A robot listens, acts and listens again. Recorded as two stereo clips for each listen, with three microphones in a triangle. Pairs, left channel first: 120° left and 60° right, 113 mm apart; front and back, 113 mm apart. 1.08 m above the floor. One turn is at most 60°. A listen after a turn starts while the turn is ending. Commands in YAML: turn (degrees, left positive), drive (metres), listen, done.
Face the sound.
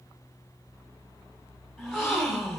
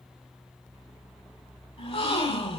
turn: 30
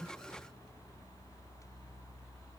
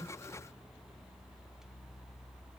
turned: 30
done: "I heard a gasp from this way, but can't make it out now."